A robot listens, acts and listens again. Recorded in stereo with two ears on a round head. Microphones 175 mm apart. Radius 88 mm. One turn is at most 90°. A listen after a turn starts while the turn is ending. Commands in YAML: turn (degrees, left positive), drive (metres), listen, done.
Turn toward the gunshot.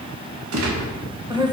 turn: -90
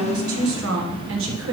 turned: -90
done: "Facing where the gunshot came from. I can't hear it now."